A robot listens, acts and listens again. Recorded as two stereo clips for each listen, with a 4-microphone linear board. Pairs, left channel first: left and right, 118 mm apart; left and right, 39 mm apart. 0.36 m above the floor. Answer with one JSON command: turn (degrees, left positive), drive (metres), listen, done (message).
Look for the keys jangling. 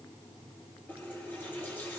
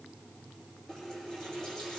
{"listen": true}
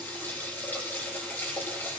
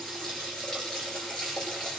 {"listen": true}
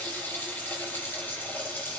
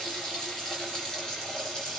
{"done": "I can't make out keys jangling to turn to."}